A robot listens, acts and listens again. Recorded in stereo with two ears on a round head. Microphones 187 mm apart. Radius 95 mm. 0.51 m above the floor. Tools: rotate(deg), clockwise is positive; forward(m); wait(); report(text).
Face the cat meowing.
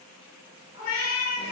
rotate(-75)
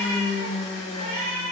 rotate(45)
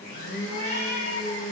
rotate(45)
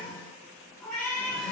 rotate(-15)
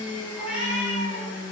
report("Facing the cat meowing.")